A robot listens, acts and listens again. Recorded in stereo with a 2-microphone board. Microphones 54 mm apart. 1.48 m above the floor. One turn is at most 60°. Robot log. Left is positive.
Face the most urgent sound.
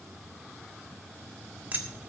cmd idle
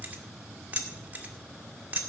cmd idle
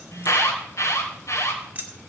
note: The alarm: about 65° left or 115° left.
cmd yaw +60
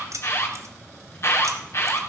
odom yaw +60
note: So it is at 55° left.
cmd yaw +55
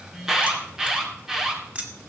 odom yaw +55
note: The alarm is now 10° right.
cmd yaw -10
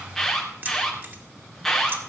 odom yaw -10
end: Found it: an alarm, straight ahead, 2 to 4 m away.